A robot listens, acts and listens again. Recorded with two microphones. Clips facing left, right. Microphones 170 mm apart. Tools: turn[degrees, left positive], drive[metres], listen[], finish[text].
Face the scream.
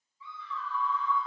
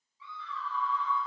Action: turn[-90]
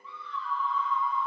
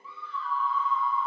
Action: finish[Found it: a scream, straight ahead, 2 to 4 m away.]